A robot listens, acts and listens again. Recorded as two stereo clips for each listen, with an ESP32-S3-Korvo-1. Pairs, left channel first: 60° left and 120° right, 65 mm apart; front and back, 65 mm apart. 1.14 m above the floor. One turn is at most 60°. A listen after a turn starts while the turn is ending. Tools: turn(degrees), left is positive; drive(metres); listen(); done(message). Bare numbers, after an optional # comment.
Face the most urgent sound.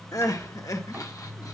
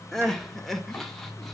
# The crying: 85° left.
turn(60)
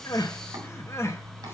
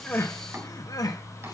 # The crying is now 15° left.
turn(15)
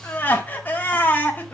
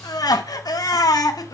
done("Found it: crying, straight ahead, 1 to 2 m away.")